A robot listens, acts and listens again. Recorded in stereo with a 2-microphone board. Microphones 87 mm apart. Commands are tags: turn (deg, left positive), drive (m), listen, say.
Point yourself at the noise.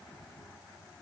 <listen/>
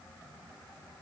<listen/>
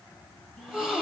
<turn deg="-30"/>
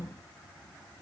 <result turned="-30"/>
<turn deg="-145"/>
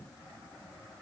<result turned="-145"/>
<say>I heard a gasp from this way, but can't make it out now.</say>